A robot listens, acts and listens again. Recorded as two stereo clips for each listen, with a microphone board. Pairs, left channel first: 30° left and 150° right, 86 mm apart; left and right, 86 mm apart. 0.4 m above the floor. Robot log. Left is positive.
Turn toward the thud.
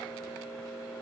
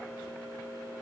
cmd idle
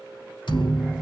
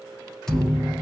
end: Found it: a thud, straight ahead, 2 to 4 m away.